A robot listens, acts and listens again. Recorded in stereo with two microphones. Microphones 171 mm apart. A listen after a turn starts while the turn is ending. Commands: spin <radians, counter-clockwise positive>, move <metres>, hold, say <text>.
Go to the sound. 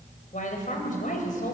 spin 0.87
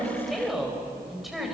move 1.0
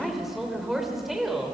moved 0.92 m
move 1.0
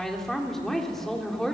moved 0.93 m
move 1.0
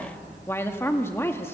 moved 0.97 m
spin 0.26
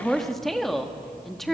move 1.0
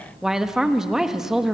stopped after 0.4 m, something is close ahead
say I am next to the woman speaking.